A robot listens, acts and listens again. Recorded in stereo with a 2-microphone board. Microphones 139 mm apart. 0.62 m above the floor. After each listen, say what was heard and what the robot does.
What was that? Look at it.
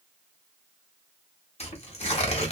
The tearing paper: about 50° left or 130° left. Turn 50° left.
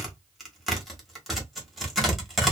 Found it: tearing paper, straight ahead.